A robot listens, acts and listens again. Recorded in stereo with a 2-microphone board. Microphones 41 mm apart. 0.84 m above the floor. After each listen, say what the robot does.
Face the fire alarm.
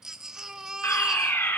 Turn 70° left.
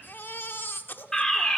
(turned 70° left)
Turn 15° left.
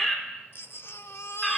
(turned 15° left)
Facing the fire alarm.